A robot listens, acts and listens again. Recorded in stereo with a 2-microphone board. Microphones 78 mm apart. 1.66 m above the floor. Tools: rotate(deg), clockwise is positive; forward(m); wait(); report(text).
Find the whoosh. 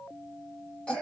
wait()
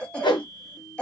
rotate(-90)
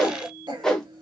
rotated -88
report("Found it: a whoosh, straight ahead.")